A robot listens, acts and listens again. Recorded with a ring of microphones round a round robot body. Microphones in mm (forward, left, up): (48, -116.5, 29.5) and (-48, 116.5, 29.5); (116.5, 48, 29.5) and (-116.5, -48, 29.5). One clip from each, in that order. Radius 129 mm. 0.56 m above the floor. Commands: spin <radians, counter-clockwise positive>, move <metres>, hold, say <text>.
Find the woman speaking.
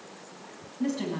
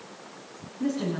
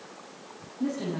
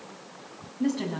spin -2.09
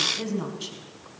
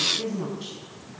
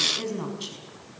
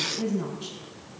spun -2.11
spin -0.17
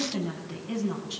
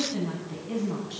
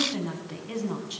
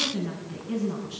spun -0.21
say Facing the woman speaking.